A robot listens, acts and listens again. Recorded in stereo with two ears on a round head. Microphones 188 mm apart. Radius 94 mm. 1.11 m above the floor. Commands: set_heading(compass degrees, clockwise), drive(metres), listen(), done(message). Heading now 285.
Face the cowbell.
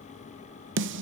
listen()
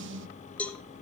set_heading(255)
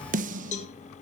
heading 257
set_heading(112)
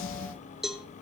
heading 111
done("Facing the cowbell.")